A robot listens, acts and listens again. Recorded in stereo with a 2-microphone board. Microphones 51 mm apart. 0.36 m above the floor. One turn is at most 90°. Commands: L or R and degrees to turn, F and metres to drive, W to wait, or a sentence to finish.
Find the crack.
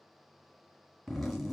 W
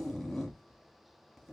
W
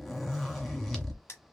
L60
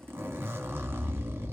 W
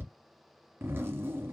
I heard a crack, but can't make it out now. It was about straight ahead or 60° left.